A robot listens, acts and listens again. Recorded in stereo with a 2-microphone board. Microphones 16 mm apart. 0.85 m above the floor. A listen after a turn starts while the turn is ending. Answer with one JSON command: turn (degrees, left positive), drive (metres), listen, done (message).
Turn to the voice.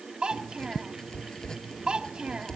{"turn": -90}
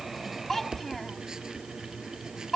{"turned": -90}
{"turn": 10}
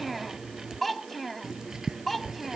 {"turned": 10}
{"done": "Found it: a child speaking, straight ahead."}